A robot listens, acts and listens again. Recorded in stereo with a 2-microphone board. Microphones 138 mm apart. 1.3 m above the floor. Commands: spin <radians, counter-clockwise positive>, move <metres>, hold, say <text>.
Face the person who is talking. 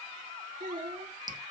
spin -1.57
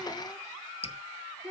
say Found it: a child speaking, straight ahead.